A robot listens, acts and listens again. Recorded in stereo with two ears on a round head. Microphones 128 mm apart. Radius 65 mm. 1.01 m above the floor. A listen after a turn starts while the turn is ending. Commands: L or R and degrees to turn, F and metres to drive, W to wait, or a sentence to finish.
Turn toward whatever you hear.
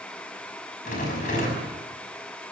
L55
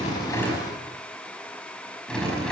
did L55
Facing the rattle.